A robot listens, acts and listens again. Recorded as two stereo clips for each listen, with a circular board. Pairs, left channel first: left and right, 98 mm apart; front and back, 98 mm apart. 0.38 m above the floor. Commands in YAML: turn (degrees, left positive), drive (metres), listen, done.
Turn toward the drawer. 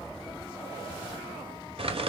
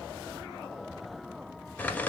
listen: true
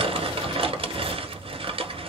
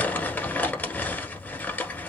listen: true
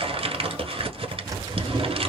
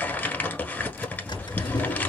turn: -35
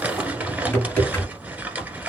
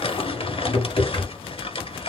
turn: 20
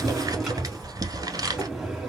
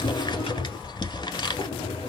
done: "Found it: a drawer, straight ahead."